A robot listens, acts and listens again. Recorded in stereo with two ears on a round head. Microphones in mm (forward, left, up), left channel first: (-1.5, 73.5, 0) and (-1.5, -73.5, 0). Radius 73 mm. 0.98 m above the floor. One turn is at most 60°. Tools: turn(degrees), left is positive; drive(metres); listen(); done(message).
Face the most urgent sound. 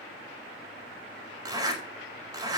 listen()
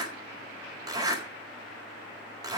listen()
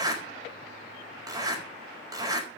done("I can't make out anything urgent to turn to.")